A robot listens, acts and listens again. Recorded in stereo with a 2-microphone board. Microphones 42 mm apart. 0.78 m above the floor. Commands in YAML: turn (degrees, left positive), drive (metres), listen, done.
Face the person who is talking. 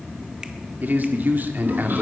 turn: -45
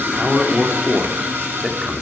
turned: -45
turn: -10
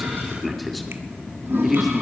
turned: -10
done: "Found it: a man speaking, straight ahead, 2 to 4 m away."